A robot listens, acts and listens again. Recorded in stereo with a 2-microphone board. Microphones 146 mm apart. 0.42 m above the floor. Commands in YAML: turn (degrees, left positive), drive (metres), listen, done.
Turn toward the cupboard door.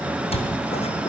turn: 40
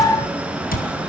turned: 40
turn: 95
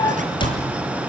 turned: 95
turn: 35
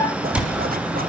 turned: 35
done: "Found it: a cupboard door, straight ahead."